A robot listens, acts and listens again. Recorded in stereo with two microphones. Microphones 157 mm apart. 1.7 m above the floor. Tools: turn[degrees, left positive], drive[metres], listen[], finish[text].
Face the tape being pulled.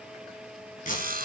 Thought: The tape being pulled: about 60° left or 120° left.
Action: turn[60]
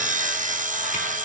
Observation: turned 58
Action: listen[]
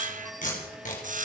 Thought: So it is at 60° left.
Action: turn[60]
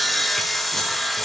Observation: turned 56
Action: listen[]
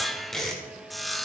Action: finish[Facing the tape being pulled, 2 to 4 m away.]